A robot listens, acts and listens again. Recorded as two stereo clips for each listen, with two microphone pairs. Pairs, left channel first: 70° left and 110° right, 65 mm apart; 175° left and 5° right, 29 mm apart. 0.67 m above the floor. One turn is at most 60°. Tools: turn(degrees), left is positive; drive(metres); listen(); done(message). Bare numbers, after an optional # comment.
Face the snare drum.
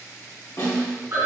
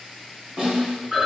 # The snare drum: 50° left.
turn(50)
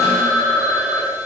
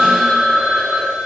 listen()
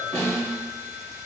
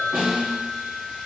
done("Found it: a snare drum, straight ahead, 1 to 2 m away.")